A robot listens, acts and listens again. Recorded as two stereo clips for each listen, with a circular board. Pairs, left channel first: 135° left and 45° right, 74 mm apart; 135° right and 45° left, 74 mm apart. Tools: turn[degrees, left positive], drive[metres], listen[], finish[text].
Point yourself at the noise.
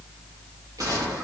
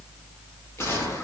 Thought: The gunshot: 80° right.
Action: turn[-80]
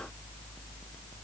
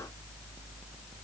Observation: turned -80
Action: finish[Facing where the gunshot came from. I can't hear it now.]